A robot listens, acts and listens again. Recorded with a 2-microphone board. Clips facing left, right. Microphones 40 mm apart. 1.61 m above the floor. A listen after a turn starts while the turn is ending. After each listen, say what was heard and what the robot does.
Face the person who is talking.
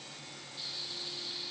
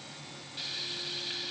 Keep listening.
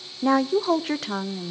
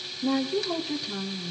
Turn 90° left.
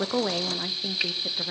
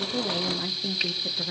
So it is at 10° left. Turn 10° left.
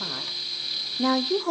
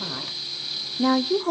Facing the woman speaking, under 1 m away.